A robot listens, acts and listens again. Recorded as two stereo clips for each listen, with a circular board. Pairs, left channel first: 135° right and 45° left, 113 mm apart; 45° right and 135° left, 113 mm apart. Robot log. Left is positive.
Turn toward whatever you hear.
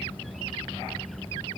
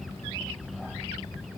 cmd idle
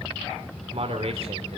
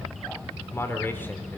note: The man speaking: 25° left.
cmd yaw +25
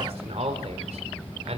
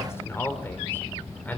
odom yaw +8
note: The man speaking is now 30° left.
cmd yaw +30
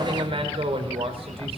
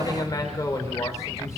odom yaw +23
note: The man speaking is now 15° left.
cmd yaw +15
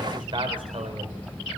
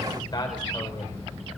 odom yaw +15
end: Facing the man speaking.